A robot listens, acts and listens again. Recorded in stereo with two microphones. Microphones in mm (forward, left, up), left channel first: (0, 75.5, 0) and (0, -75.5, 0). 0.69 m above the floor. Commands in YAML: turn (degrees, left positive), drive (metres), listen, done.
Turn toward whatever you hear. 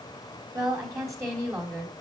turn: -30
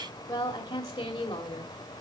turn: 30
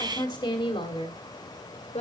turn: 45
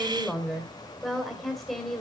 done: "Facing the woman speaking, 2 to 4 m away."